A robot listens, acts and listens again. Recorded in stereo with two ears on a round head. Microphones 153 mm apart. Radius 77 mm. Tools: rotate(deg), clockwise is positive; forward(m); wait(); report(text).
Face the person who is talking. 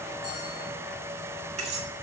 wait()
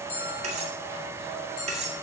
wait()
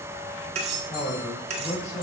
rotate(-40)
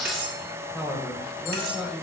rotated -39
report("Found it: a man speaking, straight ahead, 2 to 4 m away.")